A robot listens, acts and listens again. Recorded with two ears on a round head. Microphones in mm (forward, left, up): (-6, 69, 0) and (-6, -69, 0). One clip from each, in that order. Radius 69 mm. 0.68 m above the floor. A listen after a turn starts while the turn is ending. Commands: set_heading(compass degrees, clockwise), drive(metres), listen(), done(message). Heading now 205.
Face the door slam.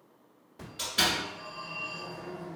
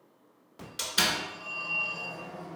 set_heading(295)
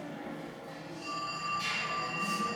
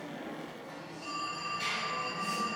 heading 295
done("I heard a door slam from this way, but can't make it out now.")